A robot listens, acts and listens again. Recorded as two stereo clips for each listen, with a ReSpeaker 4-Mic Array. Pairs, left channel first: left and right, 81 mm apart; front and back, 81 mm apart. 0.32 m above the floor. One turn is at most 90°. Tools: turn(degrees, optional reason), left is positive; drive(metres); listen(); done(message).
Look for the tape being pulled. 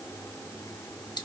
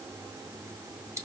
listen()
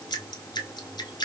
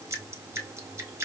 listen()
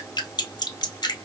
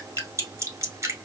done("I can't make out tape being pulled, only dripping.")